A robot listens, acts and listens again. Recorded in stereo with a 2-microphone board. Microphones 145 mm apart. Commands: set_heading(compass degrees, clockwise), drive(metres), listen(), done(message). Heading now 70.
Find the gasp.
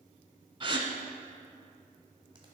set_heading(105)
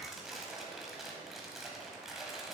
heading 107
listen()
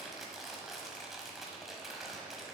done("I heard a gasp, but can't make it out now. It was about straight ahead or 105° right.")